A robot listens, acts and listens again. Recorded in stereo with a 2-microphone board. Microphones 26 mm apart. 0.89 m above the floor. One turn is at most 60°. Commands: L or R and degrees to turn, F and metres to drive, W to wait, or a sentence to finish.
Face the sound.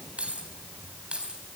R45
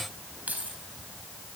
R60
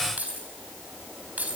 R60
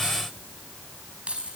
R45
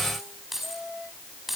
Facing the keys jangling, over 4 m away.